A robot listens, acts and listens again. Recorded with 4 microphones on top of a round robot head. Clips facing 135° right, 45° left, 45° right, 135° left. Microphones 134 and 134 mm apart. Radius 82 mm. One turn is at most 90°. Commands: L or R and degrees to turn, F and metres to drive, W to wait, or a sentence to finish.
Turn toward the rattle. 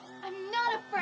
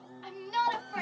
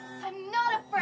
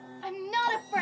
W
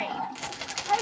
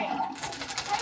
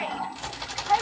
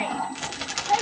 L90
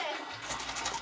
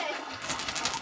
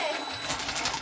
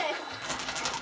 L45
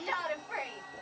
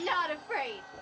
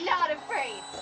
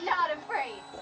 W
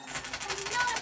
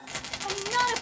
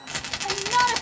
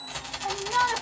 R15
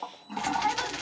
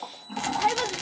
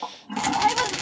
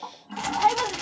Found it: a rattle, straight ahead, under 1 m away.